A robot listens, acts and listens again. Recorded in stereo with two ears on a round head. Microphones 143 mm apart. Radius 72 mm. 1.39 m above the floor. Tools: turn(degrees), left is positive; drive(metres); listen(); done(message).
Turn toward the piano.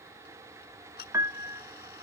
turn(degrees=-20)
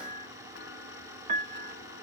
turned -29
turn(degrees=-135)
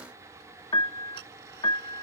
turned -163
turn(degrees=30)
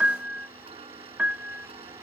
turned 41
turn(degrees=-10)
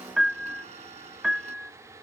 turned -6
done("Facing the piano.")